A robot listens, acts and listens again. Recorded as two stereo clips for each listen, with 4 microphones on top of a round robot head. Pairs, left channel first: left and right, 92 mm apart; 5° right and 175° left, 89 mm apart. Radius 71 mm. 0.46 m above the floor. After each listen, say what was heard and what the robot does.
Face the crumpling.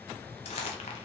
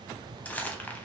The crumpling: 65° left. Turn 65° left.
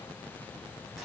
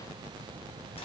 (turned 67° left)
Found it: crumpling, straight ahead.